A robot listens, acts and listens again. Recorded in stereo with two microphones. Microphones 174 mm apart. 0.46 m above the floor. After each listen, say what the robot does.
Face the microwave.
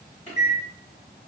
Turn 35° left.
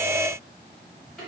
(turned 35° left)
Found it: a microwave, straight ahead, 1 to 2 m away.